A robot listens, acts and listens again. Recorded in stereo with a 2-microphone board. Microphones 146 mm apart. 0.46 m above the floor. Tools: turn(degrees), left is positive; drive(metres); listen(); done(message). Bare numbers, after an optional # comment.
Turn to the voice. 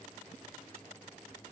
listen()
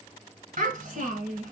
# The child speaking: about 65° right or 115° right.
turn(-65)
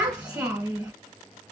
# So it is at 10° right.
turn(-10)
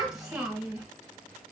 done("Found it: a child speaking, straight ahead.")